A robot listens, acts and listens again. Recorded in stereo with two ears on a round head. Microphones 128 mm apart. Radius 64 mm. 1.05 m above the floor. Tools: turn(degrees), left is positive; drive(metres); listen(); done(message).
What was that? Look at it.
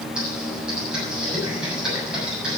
turn(degrees=-30)
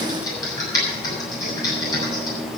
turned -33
turn(degrees=25)
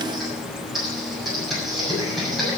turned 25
done("Found it: typing on a keyboard, straight ahead, over 4 m away.")